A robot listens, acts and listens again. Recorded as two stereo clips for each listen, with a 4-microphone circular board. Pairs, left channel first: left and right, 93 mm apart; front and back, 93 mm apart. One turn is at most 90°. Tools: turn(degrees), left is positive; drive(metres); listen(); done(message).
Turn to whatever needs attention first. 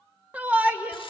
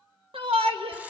turn(degrees=-90)
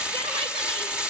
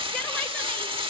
turn(degrees=-75)
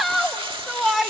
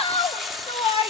done("Found it: a shout, straight ahead, 1 to 2 m away.")